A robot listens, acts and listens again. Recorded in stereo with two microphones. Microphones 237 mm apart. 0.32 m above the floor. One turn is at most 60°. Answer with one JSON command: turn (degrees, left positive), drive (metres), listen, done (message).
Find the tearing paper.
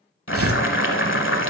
{"turn": -60}
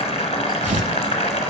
{"turn": -35}
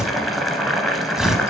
{"done": "Facing the tearing paper."}